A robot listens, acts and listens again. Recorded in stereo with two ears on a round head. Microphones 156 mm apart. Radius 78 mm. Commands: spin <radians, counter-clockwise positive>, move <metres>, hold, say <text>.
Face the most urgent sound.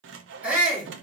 spin -0.52
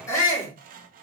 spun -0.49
spin 0.35
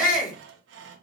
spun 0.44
say Found it: a shout, straight ahead, 2 to 4 m away.